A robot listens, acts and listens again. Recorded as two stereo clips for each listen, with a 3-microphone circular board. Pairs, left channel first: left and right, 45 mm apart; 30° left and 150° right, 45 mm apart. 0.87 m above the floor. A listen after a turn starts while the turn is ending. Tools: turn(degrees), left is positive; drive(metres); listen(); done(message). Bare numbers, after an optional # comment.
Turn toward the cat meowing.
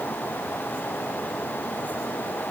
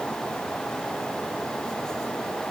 listen()
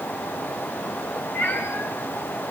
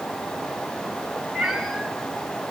# The cat meowing: 125° left.
turn(125)
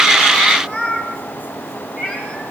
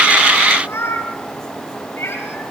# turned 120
done("Facing the cat meowing.")